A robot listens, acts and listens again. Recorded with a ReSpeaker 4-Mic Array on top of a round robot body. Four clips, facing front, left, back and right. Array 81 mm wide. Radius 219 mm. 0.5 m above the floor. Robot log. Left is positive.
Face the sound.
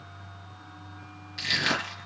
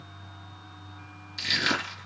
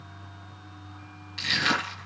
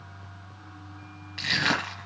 note: The crushing: 100° right.
cmd yaw -100
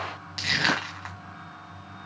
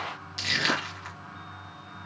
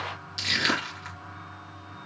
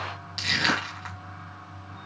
note: The crushing is now 25° right.
cmd yaw -25
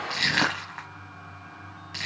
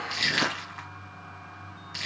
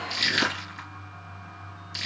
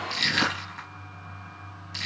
end: Facing the crushing, 1 to 2 m away.